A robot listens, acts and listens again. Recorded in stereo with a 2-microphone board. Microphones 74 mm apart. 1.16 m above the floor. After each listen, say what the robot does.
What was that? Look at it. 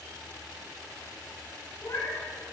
Turn 50° left.
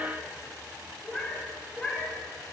Turn 10° left.
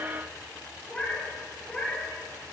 Found it: a cat meowing, straight ahead.